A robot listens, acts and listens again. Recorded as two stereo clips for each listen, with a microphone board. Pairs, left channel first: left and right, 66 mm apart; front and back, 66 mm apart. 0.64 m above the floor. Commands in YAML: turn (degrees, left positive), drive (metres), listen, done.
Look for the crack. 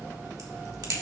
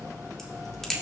turn: -85
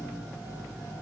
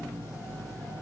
done: "Facing where the crack came from. I can't hear it now."